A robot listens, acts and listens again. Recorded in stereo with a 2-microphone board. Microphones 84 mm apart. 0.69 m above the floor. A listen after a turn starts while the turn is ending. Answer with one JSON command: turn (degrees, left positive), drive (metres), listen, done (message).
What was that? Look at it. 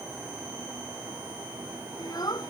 {"turn": 50}
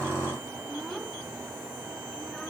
{"done": "Facing the child speaking."}